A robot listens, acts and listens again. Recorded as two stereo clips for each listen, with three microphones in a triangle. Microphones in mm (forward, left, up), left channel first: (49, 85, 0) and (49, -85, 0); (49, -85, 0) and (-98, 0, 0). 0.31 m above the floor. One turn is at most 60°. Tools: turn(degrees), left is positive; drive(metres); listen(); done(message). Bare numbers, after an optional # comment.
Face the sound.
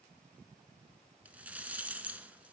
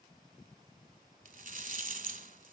# The rattle: 170° right.
turn(-60)
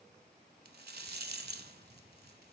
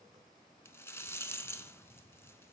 # The rattle is now 105° right.
turn(-60)
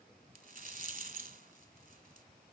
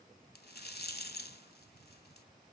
# The rattle is now 50° right.
turn(-50)
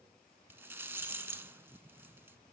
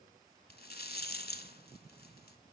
# The rattle is now 10° right.
turn(-10)
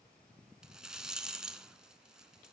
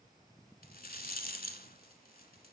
done("Facing the rattle, under 1 m away.")